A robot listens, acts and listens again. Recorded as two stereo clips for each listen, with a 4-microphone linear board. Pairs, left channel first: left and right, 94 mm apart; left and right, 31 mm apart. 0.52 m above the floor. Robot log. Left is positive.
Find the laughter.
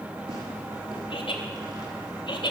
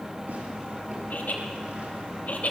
note: The laughter: about 60° left or 120° left.
cmd yaw +60
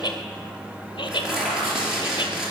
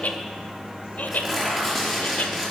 note: So it is at 55° left.
cmd yaw +55
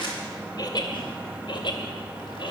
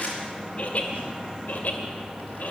note: The laughter is now 55° left.
cmd yaw +55
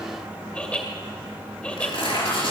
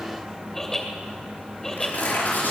note: The laughter is now 15° left.
cmd yaw +15
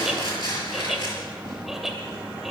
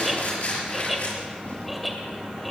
end: Found it: laughter, straight ahead.